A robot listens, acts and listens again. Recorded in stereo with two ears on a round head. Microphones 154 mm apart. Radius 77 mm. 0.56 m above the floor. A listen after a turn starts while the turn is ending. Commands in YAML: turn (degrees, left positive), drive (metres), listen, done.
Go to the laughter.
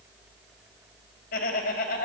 turn: 60
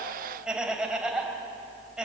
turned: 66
drive: 1.0
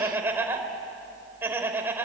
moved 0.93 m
turn: -15
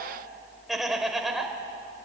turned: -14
drive: 1.0
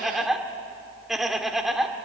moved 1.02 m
drive: 1.0
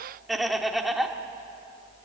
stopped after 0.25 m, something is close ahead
done: "Arrived at the laughter, straight ahead."